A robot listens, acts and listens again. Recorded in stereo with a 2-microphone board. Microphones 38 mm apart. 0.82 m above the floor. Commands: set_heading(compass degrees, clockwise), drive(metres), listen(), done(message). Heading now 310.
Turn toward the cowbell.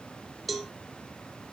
set_heading(340)
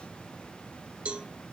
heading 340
set_heading(125)
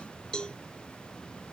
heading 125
set_heading(105)
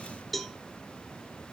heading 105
done("Found it: a cowbell, straight ahead.")